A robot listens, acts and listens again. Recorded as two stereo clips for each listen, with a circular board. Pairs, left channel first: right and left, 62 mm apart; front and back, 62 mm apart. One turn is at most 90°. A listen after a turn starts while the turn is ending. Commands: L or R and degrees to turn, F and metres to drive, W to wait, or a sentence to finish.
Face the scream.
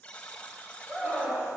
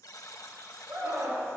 L90
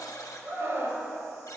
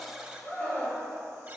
L50
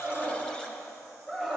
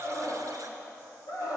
Found it: a scream, straight ahead, 2 to 4 m away.